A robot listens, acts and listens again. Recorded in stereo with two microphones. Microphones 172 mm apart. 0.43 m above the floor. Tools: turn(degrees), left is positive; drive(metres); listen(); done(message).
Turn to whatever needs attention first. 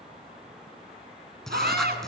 turn(degrees=-70)
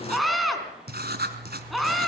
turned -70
done("Found it: a scream, straight ahead, over 4 m away.")